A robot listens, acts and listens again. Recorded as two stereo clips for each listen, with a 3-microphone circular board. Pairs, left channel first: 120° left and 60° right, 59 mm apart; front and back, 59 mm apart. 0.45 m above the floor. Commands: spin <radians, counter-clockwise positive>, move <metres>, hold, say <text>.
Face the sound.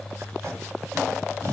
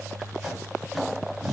spin -1.75
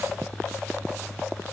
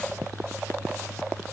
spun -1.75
hold
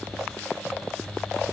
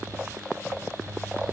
hold
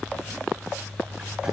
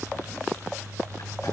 say Facing where the tape being pulled came from. I can't hear it now.